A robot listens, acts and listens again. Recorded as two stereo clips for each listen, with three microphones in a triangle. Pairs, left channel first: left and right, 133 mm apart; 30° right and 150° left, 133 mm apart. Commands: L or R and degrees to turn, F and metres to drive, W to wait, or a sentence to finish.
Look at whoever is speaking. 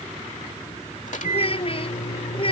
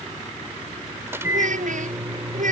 L135
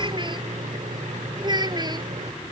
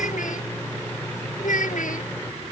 R30
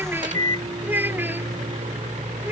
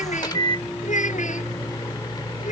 R15
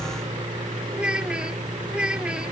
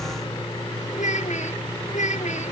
Facing the child speaking.